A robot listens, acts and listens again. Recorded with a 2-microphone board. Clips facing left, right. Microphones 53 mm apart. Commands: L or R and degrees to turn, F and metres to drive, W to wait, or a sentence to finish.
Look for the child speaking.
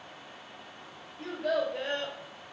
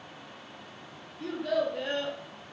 L65
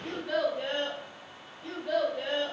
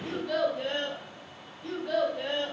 Found it: a child speaking, straight ahead, 1 to 2 m away.